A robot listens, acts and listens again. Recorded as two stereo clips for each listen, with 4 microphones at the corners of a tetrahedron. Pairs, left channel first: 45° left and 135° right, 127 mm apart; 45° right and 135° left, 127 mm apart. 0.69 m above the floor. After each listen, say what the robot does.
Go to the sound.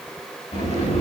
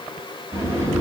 Turn 70° left.
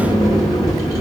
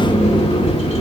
Turn 10° right.
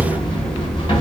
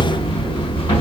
Drive 1.0 m forward.
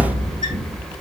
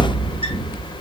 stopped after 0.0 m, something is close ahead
Blocked. The sliding door is further on, straight ahead.